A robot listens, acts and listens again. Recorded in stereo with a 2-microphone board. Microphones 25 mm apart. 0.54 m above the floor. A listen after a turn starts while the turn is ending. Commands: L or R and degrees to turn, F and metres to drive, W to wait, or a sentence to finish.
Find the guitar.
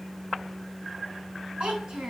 W
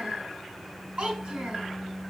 W
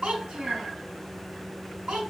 I can't make out a guitar to turn to.